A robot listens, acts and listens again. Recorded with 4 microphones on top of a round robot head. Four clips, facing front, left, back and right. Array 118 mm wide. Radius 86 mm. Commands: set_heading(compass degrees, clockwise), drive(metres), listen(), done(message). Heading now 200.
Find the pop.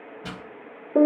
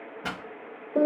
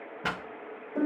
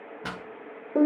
set_heading(10)
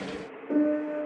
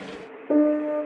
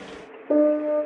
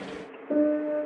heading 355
set_heading(10)
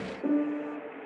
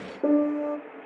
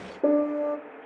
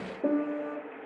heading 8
done("I heard a pop from this way, but can't make it out now.")